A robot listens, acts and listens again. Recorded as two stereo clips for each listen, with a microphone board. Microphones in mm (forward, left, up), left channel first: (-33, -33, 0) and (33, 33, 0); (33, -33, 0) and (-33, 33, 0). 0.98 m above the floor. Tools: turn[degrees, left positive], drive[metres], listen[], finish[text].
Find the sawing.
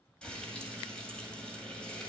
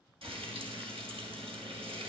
Action: listen[]
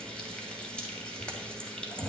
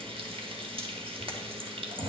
Action: listen[]
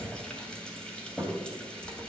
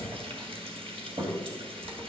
Action: finish[I can't make out sawing to turn to.]